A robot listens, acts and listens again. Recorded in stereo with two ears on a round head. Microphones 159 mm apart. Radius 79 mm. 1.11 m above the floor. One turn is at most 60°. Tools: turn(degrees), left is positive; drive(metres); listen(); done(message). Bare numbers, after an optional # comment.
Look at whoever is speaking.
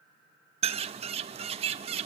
listen()
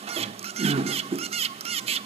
listen()
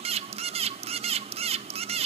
done("I can't make out anyone speaking, only a bird.")